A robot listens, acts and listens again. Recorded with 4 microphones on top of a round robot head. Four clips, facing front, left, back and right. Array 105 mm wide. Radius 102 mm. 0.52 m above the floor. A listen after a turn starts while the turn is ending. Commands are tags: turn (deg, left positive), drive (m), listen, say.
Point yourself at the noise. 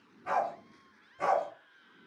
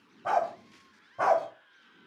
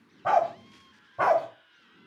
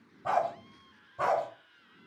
<turn deg="155"/>
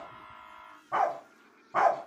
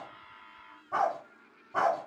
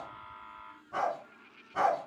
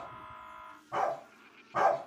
<turn deg="10"/>
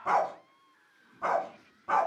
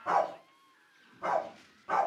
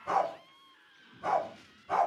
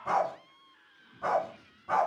<say>Facing the dog barking.</say>